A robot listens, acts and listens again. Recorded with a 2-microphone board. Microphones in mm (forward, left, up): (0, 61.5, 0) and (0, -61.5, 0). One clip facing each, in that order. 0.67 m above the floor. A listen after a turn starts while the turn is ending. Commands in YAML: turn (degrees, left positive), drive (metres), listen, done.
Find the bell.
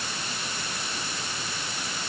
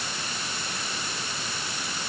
listen: true
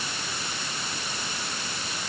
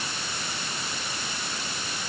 listen: true
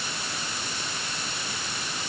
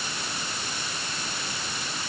done: "I can't make out a bell to turn to."